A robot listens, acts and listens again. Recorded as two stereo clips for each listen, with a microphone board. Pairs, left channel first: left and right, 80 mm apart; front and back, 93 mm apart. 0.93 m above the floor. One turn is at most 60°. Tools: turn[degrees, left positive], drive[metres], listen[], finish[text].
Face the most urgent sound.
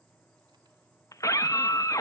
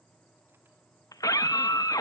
Thought: The scream: 45° left.
Action: turn[45]
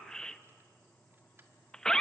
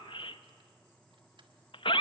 Thought: The scream is now 10° left.
Action: turn[10]
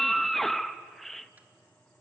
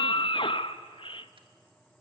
Action: finish[Found it: a scream, straight ahead, under 1 m away.]